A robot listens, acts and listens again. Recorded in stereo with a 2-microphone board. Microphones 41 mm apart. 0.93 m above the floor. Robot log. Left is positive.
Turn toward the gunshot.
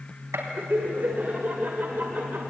cmd yaw -90
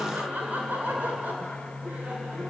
end: Facing where the gunshot came from. I can't hear it now.